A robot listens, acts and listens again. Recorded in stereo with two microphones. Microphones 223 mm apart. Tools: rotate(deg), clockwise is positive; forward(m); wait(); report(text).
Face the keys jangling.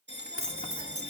rotate(70)
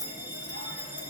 rotate(15)
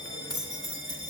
rotate(25)
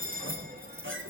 rotate(10)
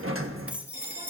report("Found it: keys jangling, straight ahead, 2 to 4 m away.")